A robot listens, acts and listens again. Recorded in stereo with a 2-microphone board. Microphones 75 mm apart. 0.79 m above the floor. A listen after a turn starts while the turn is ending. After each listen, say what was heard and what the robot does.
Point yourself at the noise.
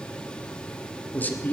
The man speaking: about 25° left or 155° left. Turn 25° left.
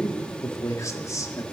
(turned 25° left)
So it is at 130° left. Turn 130° left.
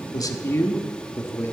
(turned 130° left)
The man speaking is now 40° left. Turn 40° left.
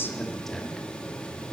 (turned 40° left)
Found it: a man speaking, straight ahead, 1 to 2 m away.